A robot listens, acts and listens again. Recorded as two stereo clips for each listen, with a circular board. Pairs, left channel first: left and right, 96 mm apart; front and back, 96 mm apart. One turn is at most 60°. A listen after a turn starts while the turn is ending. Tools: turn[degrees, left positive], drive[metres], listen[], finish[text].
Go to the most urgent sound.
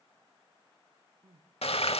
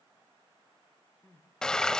Thought: The crying: 70° right.
Action: turn[-60]
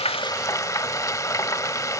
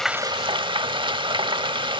Thought: Nothing new. It was at 10° right.
Action: turn[-10]
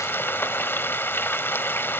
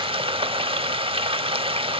Action: listen[]
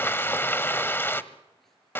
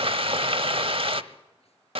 Action: finish[I heard crying from this way, but can't make it out now. I did not reach it.]